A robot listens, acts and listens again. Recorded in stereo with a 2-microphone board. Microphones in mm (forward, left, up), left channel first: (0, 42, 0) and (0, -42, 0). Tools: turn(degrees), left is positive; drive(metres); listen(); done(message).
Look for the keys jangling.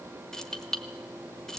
turn(degrees=30)
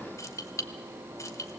turn(degrees=145)
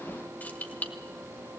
turn(degrees=20)
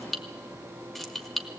done("Facing the keys jangling, 1 to 2 m away.")